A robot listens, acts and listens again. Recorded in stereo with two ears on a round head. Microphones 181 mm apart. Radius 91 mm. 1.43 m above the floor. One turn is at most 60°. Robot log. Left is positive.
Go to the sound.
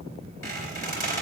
cmd yaw +30
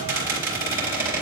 note: So it is at 15° right.
cmd yaw -15
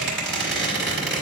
cmd fwd 1.0
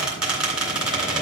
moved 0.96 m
cmd fwd 1.0
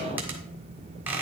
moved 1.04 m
note: The squeak is now 15° right.
cmd yaw -15
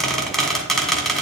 cmd fwd 1.0
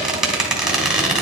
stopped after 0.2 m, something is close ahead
end: I am next to the squeak.